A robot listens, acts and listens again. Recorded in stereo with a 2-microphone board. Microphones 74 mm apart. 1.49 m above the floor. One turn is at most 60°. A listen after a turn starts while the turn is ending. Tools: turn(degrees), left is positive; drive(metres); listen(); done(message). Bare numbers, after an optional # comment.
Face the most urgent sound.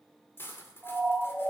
turn(-30)
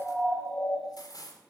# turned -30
# So it is at 20° left.
turn(20)
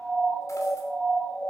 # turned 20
done("Found it: a siren, straight ahead.")